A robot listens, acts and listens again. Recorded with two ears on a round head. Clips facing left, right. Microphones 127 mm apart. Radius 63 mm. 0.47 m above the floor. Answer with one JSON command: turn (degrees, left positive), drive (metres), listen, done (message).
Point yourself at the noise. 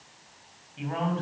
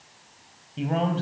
{"turn": -40}
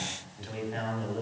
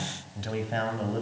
{"turn": -115}
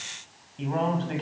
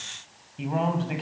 {"turn": -10}
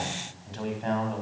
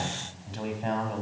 {"turn": -10}
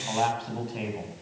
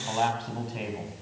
{"done": "Facing the man speaking."}